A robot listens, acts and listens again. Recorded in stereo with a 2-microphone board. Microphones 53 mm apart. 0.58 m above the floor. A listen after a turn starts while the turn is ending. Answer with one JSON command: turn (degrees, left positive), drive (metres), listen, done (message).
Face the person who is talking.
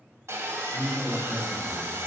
{"turn": 30}
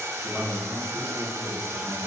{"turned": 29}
{"turn": 10}
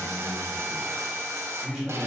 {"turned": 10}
{"done": "Facing the man speaking, 1 to 2 m away."}